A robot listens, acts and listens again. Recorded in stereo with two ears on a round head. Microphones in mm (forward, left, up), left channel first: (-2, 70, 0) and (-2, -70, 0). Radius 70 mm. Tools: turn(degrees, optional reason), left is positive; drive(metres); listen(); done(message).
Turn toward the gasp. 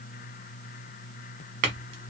listen()
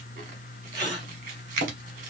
turn(degrees=-25, reason="The gasp: about 25° right or 155° right.")
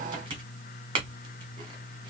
listen()
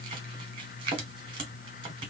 done("I heard a gasp, but can't make it out now. It was about straight ahead or 130° right.")